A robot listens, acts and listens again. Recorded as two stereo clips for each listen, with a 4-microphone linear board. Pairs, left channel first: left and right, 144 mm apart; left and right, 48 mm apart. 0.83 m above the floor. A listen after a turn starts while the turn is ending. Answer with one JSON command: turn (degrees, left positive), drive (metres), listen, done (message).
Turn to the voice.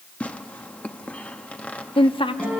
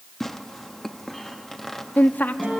{"turn": 35}
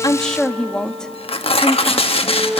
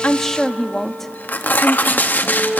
{"done": "Found it: a woman speaking, straight ahead."}